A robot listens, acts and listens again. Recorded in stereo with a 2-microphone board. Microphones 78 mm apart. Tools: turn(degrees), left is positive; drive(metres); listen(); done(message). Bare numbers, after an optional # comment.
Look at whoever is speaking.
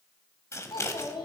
turn(90)
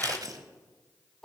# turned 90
done("Facing the child speaking, 2 to 4 m away.")